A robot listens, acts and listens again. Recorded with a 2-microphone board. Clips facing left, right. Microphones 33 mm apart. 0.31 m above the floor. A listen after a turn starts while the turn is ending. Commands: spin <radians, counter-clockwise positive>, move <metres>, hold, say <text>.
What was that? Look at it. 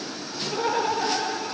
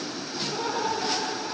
spin 0.79
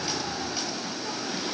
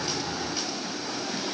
hold
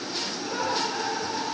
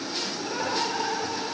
spin -0.17
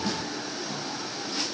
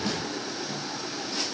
hold
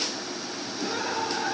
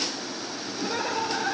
spin -0.26
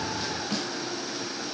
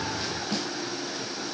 hold
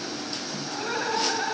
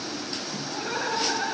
say Found it: laughter, straight ahead, over 4 m away.